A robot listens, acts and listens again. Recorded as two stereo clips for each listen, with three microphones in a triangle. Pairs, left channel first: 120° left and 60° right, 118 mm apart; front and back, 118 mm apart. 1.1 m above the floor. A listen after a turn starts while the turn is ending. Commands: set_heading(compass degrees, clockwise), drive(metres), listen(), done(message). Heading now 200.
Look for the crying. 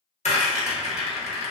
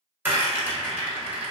listen()
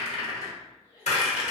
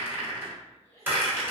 set_heading(145)
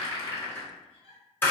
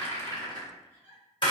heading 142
done("Found it: crying, straight ahead.")